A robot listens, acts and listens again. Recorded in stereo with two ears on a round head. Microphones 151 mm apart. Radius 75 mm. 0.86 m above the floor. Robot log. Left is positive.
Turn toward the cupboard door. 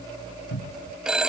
note: The cupboard door: about 70° left or 110° left.
cmd yaw +70
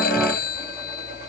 cmd idle
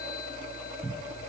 end: Facing the cupboard door.